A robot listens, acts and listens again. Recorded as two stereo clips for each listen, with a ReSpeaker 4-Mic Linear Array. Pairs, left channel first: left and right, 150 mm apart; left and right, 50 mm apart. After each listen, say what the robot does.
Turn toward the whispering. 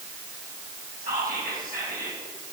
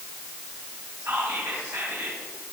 Turn 75° right.
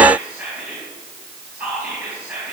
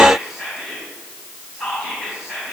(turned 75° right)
Turn 10° right.
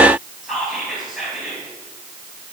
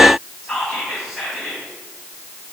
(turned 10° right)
Facing the whispering, 2 to 4 m away.